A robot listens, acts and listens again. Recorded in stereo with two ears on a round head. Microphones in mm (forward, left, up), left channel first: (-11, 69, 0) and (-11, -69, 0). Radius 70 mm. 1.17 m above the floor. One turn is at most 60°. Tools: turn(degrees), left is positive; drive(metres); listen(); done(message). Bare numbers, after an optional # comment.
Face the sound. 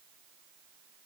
listen()
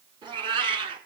# The cat meowing: about 40° right or 140° right.
turn(-40)
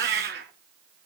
# So it is at 105° right.
turn(-60)
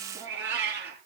# The cat meowing is now 10° right.
turn(-10)
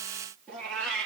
done("Found it: a cat meowing, straight ahead, over 4 m away.")